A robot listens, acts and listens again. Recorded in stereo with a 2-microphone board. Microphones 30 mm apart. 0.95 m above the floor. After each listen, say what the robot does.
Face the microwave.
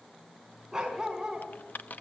Keep listening.
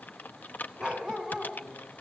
Keep listening.
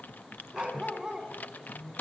Turn 30° right.
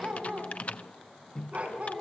Turn 20° left.
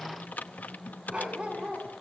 Found it: a microwave, straight ahead, under 1 m away.